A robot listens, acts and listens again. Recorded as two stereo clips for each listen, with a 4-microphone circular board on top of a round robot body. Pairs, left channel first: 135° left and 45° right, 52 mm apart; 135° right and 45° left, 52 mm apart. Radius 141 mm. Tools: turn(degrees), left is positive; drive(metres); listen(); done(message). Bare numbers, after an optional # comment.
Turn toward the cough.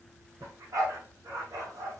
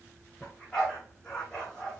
listen()
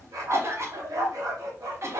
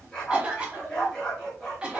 # The cough: 25° right.
turn(-25)
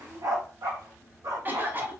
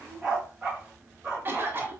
done("Found it: a cough, straight ahead.")